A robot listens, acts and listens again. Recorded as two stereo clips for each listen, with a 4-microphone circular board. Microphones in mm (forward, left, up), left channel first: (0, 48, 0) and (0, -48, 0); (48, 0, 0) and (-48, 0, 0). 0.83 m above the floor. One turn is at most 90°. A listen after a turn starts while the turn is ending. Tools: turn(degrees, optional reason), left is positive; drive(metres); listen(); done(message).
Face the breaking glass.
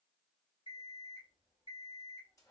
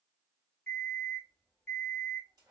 listen()
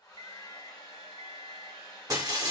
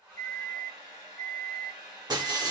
turn(degrees=-90, reason="The breaking glass: 140° right.")
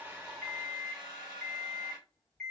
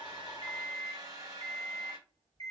turn(degrees=-50, reason="Nothing new. It was at 50° right.")
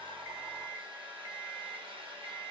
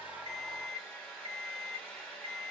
done("Facing where the breaking glass came from. I can't hear it now.")